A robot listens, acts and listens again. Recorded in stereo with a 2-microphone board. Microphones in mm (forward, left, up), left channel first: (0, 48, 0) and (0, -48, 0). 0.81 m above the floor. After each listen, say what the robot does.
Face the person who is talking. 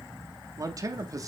Turn 35° right.
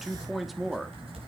Facing the man speaking, 1 to 2 m away.